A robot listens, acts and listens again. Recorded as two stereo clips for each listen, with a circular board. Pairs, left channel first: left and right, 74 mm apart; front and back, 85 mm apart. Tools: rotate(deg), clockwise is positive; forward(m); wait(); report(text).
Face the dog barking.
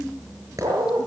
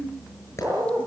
rotate(120)
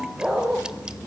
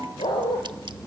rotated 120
rotate(15)
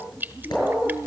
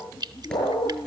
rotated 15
report("Found it: a dog barking, straight ahead, over 4 m away.")